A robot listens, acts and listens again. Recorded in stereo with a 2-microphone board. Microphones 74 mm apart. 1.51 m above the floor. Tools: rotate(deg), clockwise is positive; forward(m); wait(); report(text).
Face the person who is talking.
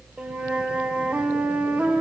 wait()
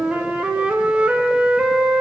wait()
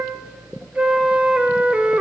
report("I can't make out anyone speaking, only a flute.")